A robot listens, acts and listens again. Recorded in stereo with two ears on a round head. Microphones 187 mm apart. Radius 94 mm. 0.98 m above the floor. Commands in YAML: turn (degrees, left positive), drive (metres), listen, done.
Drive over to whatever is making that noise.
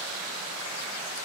listen: true
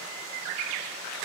listen: true
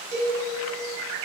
turn: -30
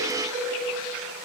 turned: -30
turn: -120
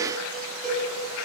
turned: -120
drive: 1.0
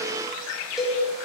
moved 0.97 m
drive: 1.0
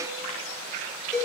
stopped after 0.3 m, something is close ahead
done: "I am next to the cowbell."